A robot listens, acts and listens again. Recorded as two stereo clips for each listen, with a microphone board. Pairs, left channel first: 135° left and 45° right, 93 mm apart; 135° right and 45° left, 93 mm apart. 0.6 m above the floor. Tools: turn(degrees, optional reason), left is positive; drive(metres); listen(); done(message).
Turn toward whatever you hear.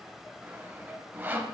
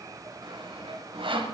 turn(degrees=25, reason="The sawing: 25° left.")
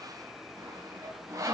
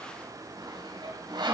turn(degrees=10, reason="The sawing is now 10° left.")
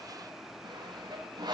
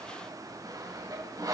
done("Found it: sawing, straight ahead, 2 to 4 m away.")